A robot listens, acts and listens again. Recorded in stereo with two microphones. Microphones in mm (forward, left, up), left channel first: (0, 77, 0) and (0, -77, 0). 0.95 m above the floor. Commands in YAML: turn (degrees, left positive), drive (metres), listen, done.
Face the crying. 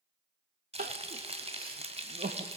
turn: -90
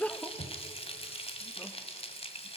turn: 10
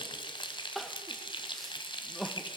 done: "Facing the crying, under 1 m away."